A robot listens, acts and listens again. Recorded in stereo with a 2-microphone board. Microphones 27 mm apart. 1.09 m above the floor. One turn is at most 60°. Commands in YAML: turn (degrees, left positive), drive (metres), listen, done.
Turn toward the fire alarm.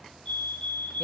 turn: 50
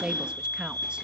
turn: 60
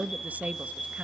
turn: 10
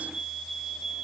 done: "Facing the fire alarm, over 4 m away."